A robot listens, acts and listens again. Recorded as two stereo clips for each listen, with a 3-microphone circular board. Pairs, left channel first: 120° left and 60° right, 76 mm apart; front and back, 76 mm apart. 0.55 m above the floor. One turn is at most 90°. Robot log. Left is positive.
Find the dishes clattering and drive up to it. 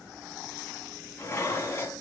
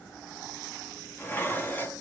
note: The dishes clattering: 65° left.
cmd yaw +65
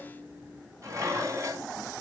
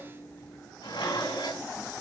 note: The dishes clattering is now 10° right.
cmd yaw -10
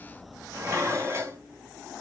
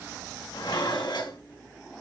cmd fwd 1.0
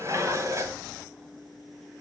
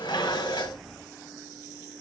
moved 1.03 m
note: The dishes clattering is now 10° right.
cmd yaw -10
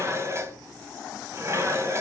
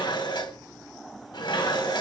cmd fwd 1.0
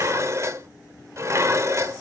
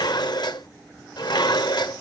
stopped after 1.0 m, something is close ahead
note: The dishes clattering is now 10° right.
cmd yaw -10
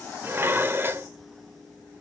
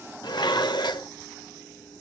end: I am next to the dishes clattering.